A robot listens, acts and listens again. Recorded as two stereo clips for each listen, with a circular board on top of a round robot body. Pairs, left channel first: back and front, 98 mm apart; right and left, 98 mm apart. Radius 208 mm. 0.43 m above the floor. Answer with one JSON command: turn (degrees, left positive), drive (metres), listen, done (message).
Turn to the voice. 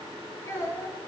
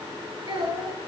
{"turn": 120}
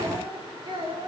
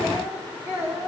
{"turn": 25}
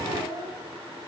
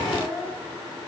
{"done": "Found it: a child speaking, straight ahead."}